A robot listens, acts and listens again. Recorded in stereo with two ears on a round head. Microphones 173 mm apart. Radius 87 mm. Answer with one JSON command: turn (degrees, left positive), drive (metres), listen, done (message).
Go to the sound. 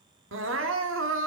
{"turn": -75}
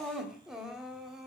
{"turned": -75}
{"drive": 1.0}
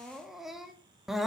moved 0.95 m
{"drive": 1.0}
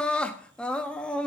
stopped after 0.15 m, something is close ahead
{"done": "Arrived at the crying, straight ahead."}